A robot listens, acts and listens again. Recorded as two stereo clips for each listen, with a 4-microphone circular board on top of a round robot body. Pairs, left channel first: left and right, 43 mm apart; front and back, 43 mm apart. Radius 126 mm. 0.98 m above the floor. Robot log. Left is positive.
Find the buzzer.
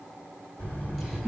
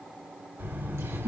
note: The buzzer: 140° left.
cmd yaw +140
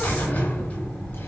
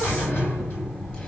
note: The buzzer is now 30° left.
cmd yaw +30
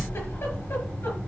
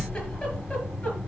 note: The buzzer is now 30° left.
cmd yaw +30
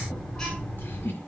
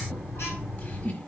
note: The buzzer is now 15° left.
cmd yaw +15
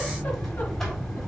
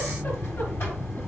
note: The buzzer is now 10° left.
cmd yaw +10
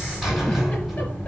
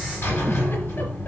end: Facing the buzzer, over 4 m away.